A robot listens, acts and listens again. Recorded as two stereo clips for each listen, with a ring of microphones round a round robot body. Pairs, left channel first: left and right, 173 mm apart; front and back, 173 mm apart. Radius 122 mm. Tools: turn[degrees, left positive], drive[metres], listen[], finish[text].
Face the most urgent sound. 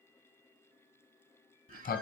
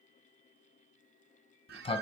Action: listen[]
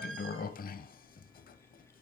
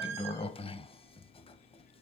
Action: listen[]
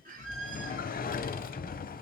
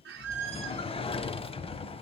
Action: finish[I can't make out anything urgent to turn to.]